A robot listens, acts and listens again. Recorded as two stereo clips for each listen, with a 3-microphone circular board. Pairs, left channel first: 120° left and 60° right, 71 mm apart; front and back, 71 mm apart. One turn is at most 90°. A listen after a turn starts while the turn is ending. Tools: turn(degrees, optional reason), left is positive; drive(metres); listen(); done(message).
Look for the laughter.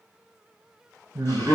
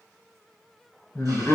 turn(degrees=-50, reason="The laughter: 50° right.")
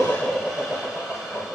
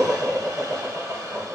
done("Facing the laughter.")